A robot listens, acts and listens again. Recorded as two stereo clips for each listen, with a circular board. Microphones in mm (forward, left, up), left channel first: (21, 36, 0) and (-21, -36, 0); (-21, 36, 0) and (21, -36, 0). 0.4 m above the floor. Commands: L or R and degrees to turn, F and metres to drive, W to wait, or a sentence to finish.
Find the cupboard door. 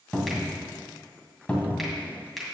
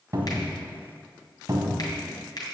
R15
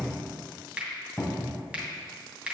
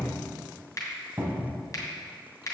Facing the cupboard door.